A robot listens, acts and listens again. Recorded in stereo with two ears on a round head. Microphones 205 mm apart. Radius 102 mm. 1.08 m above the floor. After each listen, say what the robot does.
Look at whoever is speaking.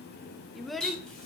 Turn 30° left.
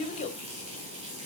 Turn 150° left.
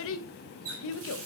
Turn 60° left.
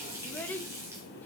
Turn 10° left.
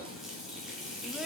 Keep listening.
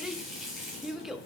Facing the child speaking.